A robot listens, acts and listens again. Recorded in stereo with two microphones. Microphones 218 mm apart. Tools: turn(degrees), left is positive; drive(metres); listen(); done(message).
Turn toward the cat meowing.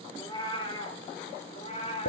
turn(degrees=30)
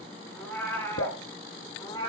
turn(degrees=20)
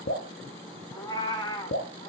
turn(degrees=20)
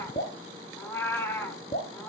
turn(degrees=10)
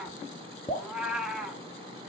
done("Facing the cat meowing.")